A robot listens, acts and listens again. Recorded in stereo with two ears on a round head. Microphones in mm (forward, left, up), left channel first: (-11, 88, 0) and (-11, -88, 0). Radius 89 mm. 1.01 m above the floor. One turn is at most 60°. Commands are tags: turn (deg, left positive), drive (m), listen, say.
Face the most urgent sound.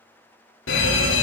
<turn deg="60"/>
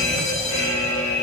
<turn deg="35"/>
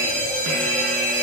<turn deg="10"/>
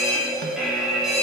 <say>Facing the fire alarm, 2 to 4 m away.</say>